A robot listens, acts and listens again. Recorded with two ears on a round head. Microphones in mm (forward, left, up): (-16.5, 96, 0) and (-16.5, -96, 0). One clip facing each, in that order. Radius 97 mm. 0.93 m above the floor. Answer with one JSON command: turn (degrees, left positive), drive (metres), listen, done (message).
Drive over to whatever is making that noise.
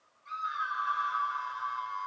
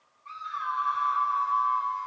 {"turn": 30}
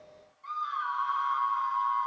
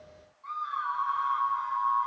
{"turn": 140}
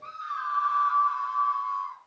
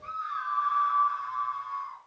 {"turn": 60}
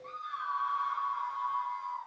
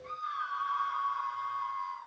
{"drive": 1.0}
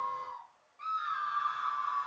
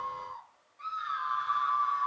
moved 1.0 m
{"drive": 1.0}
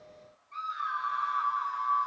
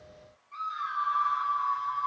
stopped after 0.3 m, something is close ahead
{"done": "Blocked. The scream is further on, straight ahead."}